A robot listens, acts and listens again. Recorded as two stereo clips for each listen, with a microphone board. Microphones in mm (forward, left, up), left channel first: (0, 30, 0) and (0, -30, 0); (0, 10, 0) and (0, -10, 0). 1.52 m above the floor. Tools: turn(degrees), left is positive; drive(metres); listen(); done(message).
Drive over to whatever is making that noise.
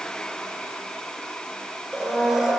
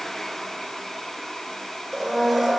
turn(degrees=-15)
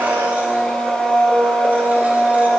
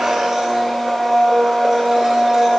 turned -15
turn(degrees=-150)
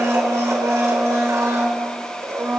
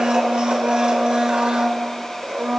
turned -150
turn(degrees=-60)
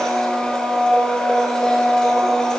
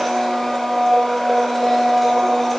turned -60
turn(degrees=15)
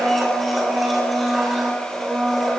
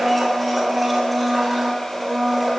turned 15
drive(metres=1.0)
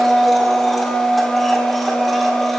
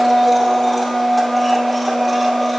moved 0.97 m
drive(metres=1.0)
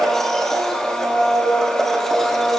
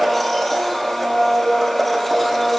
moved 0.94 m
turn(degrees=10)
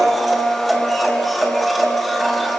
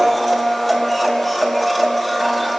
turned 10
drive(metres=1.0)
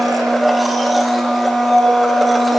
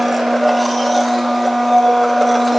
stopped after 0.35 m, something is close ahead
done("I am next to the blender.")